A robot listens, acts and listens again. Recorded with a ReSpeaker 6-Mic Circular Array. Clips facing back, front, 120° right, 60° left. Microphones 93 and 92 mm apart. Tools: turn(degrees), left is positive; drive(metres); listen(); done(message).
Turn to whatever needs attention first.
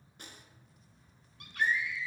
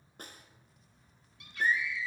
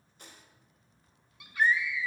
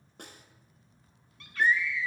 turn(degrees=165)
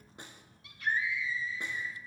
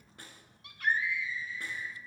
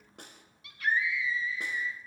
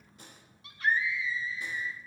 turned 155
turn(degrees=10)
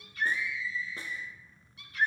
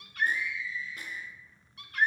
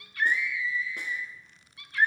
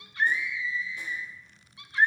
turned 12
done("Found it: a scream, straight ahead, 1 to 2 m away.")